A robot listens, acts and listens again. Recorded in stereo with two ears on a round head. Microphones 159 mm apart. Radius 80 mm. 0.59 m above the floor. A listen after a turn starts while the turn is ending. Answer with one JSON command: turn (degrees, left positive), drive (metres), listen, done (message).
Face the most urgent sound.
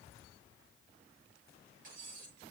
{"listen": true}
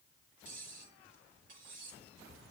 {"listen": true}
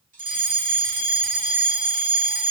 {"turn": -50}
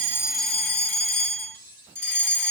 {"turn": -15}
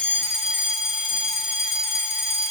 {"done": "Facing the fire alarm."}